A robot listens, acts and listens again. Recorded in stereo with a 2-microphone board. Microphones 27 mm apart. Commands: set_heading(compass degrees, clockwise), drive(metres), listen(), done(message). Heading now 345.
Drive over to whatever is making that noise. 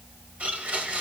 set_heading(45)
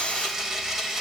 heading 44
set_heading(59)
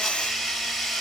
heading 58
drive(1.0)
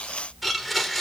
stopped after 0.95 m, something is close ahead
done("I am next to the blender.")